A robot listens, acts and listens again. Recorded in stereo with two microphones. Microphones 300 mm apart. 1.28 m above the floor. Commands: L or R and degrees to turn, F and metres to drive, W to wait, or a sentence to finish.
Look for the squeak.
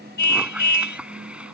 R30
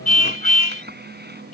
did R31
R145
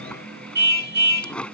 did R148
Found it: a squeak, straight ahead.